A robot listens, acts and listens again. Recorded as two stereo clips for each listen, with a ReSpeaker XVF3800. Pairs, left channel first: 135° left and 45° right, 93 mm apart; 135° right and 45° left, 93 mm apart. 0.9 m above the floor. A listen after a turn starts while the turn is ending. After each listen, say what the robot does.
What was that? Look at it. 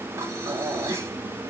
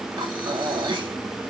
Turn 15° left.
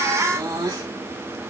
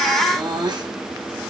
Found it: breathing, straight ahead.